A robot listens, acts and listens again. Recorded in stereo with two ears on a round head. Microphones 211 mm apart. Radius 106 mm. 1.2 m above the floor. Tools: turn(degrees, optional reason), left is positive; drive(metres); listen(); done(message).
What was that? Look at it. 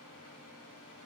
listen()
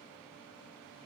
listen()
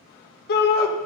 turn(degrees=45, reason="The shout: about 45° left or 135° left.")
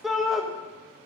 done("Found it: a shout, straight ahead.")